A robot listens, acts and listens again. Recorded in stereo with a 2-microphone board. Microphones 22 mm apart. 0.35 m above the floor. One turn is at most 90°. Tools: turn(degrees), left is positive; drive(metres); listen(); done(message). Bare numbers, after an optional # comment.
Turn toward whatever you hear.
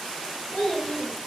turn(90)
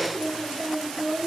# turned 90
# So it is at 15° left.
turn(15)
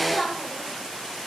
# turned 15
done("Found it: a child speaking, straight ahead.")